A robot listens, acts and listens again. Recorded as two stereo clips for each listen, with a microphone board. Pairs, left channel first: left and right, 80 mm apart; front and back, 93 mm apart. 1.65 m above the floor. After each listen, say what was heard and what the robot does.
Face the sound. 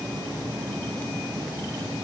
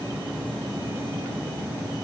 Keep listening.
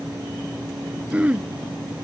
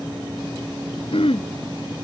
The throat clearing: 15° right. Turn 15° right.
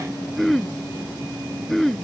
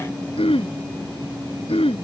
Found it: throat clearing, straight ahead.